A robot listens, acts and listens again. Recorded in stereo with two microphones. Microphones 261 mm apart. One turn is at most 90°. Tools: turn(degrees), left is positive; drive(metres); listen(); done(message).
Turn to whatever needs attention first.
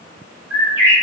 listen()
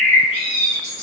listen()
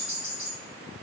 done("I can't make out anything urgent to turn to.")